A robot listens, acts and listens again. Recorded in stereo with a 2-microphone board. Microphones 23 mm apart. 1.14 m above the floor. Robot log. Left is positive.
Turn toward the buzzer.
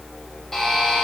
note: The buzzer: about 15° left or 165° left.
cmd yaw +15
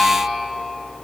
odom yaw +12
cmd idle
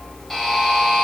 end: Found it: a buzzer, straight ahead, 2 to 4 m away.